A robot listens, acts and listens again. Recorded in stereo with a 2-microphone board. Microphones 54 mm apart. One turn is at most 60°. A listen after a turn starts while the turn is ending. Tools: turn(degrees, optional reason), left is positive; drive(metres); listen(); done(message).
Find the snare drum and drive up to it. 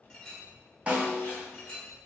turn(degrees=-25, reason="The snare drum: about 25° right or 155° right.")
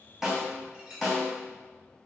drive(metres=1.0)
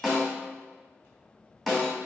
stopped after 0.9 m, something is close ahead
done("I am next to the snare drum.")